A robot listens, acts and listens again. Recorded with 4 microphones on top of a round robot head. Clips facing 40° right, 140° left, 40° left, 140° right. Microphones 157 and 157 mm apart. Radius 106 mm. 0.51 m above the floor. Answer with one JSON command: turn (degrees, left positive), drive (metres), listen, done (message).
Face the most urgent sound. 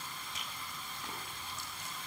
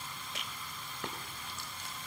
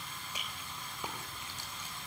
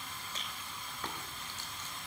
{"listen": true}
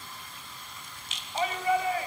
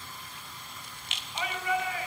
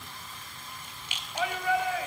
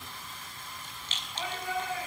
{"turn": 20}
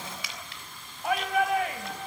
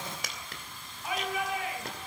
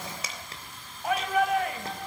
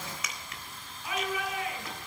{"done": "Found it: a shout, straight ahead, 2 to 4 m away."}